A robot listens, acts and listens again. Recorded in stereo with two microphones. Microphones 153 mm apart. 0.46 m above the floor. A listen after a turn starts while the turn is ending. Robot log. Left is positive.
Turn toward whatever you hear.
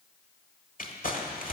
note: The crumpling: about 65° left or 115° left.
cmd yaw +65
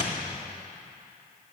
cmd idle
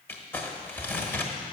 note: So it is at 15° left.
cmd yaw +15
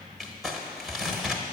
end: Found it: crumpling, straight ahead, 1 to 2 m away.